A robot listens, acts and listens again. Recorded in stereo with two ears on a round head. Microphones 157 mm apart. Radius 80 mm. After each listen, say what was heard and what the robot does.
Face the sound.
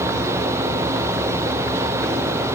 Keep listening.
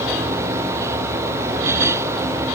Keep listening.
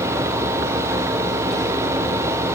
I can't make out anything to turn to.